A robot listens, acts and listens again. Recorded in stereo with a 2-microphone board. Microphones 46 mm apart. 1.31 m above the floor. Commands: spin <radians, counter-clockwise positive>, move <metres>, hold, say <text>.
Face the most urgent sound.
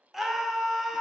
spin -0.52
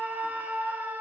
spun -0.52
spin -2.53
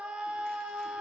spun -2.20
spin -0.35
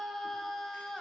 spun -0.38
say Found it: a scream, straight ahead.